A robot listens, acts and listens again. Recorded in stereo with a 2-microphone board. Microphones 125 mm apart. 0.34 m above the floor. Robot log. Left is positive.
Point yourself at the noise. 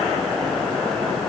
cmd idle
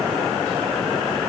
cmd idle
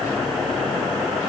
end: I can't make out anything to turn to.